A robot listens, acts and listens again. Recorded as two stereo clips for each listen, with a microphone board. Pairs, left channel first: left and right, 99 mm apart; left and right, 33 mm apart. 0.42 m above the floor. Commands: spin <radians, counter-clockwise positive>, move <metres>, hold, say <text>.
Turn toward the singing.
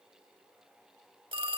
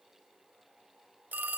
hold
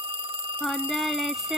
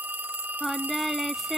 spin -0.52
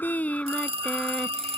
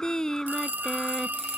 spin 0.52
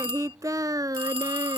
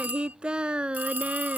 spin -0.70
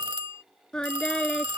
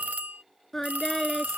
spin 0.17
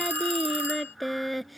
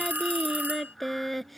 say Found it: singing, straight ahead.